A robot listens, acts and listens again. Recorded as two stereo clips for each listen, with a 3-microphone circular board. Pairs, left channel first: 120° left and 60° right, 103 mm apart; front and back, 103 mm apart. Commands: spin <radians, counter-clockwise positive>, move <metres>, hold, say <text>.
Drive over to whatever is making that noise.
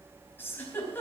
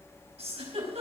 spin -2.97
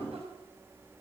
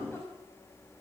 hold
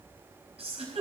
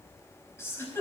spin -1.13
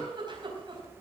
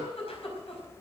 spin -0.35
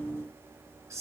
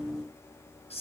move 1.0
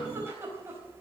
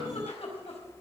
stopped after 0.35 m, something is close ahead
say Blocked. The giggle is further on, straight ahead.